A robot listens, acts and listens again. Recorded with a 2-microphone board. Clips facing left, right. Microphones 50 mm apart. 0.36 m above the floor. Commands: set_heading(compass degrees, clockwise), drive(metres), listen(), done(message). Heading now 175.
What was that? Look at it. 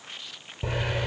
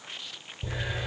set_heading(100)
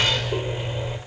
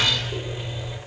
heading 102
set_heading(72)
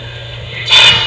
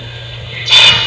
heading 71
done("Found it: a hiss, straight ahead.")